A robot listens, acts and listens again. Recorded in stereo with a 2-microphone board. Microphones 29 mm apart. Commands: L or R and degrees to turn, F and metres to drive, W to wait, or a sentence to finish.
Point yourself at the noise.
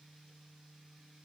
W
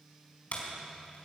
L50
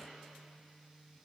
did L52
W
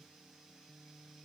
I heard a door slam, but can't make it out now. It was about straight ahead or 75° left.